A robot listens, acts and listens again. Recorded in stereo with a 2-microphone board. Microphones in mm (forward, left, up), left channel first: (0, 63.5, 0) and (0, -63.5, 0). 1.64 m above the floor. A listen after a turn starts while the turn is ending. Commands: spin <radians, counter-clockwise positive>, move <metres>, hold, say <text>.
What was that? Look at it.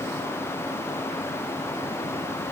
hold
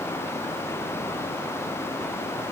hold
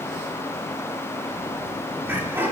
spin -0.26
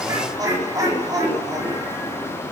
spin -0.52
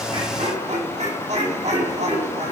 spin -2.01
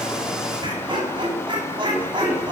spin -0.70
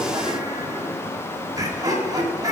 spin -0.52
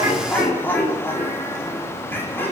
spin 0.26
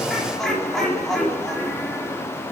say Found it: laughter, straight ahead, over 4 m away.